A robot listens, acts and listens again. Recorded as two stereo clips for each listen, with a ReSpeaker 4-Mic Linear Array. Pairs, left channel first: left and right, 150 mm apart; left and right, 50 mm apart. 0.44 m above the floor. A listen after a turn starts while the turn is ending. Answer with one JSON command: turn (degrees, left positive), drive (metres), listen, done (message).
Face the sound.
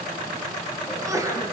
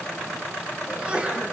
{"turn": -20}
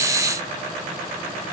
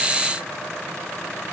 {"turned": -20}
{"listen": true}
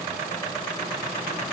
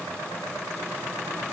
{"done": "I heard a sneeze, but can't make it out now. It was about straight ahead or 140° right."}